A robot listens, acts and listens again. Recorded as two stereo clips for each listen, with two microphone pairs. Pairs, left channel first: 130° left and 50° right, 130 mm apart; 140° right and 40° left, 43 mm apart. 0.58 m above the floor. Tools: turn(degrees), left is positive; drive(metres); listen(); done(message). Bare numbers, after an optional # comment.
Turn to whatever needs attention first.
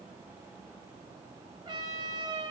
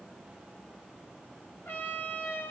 listen()
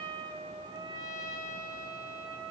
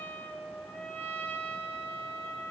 listen()
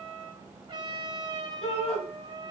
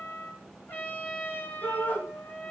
# The shout: 175° left.
turn(175)
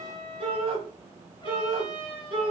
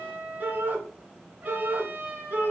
done("Facing the shout.")